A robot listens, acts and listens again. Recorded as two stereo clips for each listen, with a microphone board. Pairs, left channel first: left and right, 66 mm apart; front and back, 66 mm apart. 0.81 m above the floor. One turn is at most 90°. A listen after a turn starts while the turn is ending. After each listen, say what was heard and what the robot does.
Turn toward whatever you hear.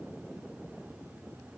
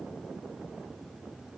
Keep listening.
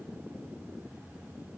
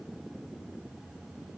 Keep listening.
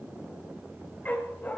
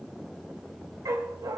The dog barking: 155° left. Turn 90° left.
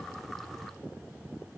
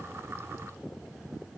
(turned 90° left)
Nothing new. It was at 65° left. Turn 65° left.
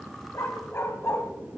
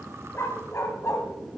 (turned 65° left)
The dog barking is now 45° left. Turn 45° left.
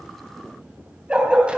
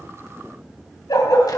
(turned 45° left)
The dog barking is now 15° right. Turn 15° right.
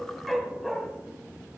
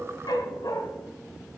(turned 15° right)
Facing the dog barking.